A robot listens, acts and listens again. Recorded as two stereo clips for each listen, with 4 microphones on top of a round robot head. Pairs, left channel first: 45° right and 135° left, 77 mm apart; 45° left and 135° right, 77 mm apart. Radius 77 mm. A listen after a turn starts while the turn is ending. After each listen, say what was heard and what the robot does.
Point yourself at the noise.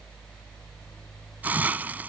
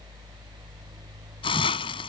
The hiss: 60° left. Turn 60° left.
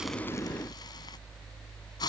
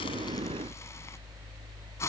The hiss is now 10° right. Turn 10° right.
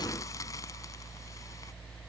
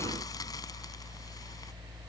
Keep listening.
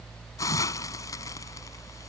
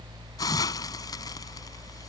Facing the hiss.